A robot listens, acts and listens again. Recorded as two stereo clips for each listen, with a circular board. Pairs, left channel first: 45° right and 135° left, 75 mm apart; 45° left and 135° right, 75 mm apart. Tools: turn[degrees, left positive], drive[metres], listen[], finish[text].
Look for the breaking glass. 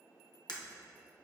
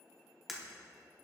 Thought: The breaking glass: 50° right.
Action: turn[-50]
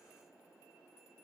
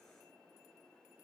Action: finish[I heard breaking glass from this way, but can't make it out now.]